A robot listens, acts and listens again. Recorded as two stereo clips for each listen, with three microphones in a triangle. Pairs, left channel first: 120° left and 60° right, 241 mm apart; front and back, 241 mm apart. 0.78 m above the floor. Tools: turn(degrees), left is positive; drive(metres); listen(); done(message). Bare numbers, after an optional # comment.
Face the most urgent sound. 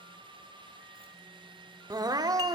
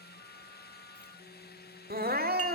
# The crying: 135° right.
turn(-135)
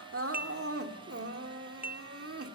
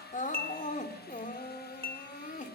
# The crying is now 55° right.
turn(-55)
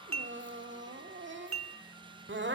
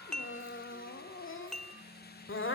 # The crying is now 25° right.
turn(-25)
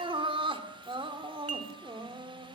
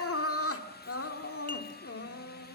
done("Found it: crying, straight ahead.")